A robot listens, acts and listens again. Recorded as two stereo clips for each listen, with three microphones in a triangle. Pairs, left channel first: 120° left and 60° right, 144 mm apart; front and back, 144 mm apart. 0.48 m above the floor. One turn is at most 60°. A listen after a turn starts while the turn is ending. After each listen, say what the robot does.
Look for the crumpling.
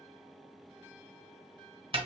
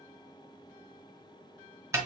Keep listening.
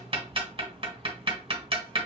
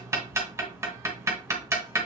Keep listening.
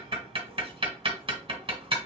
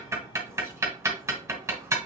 I can't make out crumpling, only ticking.